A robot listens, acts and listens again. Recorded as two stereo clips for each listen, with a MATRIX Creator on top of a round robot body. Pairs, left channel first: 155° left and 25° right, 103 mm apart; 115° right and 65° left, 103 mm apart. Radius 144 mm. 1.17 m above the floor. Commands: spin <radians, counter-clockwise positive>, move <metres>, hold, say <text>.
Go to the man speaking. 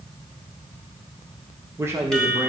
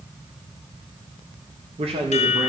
spin 0.79
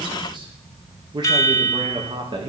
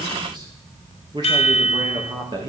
spin 0.44
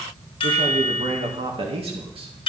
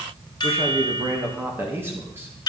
move 1.0
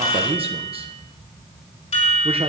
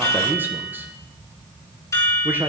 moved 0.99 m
move 1.0
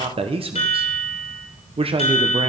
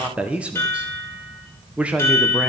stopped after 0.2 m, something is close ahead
spin -0.17
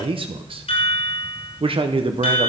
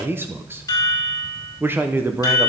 say I am next to the man speaking.